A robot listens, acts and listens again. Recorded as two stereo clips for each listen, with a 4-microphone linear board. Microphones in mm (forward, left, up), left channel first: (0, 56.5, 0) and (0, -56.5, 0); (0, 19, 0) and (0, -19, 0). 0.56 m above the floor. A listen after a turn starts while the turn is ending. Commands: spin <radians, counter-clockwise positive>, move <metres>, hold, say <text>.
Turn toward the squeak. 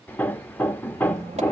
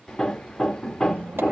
spin -1.57
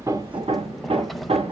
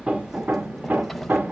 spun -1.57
say Facing the squeak.